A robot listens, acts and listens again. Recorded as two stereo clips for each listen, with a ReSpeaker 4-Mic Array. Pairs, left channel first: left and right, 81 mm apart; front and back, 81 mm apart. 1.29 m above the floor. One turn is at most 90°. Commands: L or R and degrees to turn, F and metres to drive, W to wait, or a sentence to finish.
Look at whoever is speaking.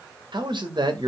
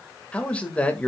R75
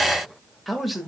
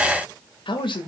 Facing the man speaking, 1 to 2 m away.